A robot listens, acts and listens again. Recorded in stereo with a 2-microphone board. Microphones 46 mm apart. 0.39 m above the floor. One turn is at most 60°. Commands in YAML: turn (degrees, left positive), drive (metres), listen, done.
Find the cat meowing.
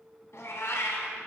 turn: 60
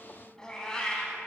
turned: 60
turn: 15
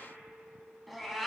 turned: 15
done: "Found it: a cat meowing, straight ahead."